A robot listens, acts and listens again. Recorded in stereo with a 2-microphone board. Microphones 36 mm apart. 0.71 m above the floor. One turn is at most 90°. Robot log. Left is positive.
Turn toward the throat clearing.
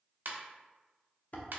cmd idle
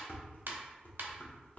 cmd idle
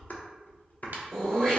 cmd yaw +30
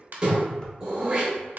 note: So it is at 25° right.
cmd yaw -25
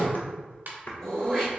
note: The throat clearing is now 10° left.
cmd yaw +10
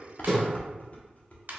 end: Facing the throat clearing, 1 to 2 m away.